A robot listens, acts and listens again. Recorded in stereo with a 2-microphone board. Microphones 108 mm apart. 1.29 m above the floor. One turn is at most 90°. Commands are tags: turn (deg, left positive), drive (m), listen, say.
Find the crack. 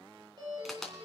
<turn deg="30"/>
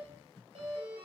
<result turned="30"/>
<listen/>
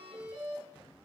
<say>I heard a crack, but can't make it out now. It was about 25° right or 145° left.</say>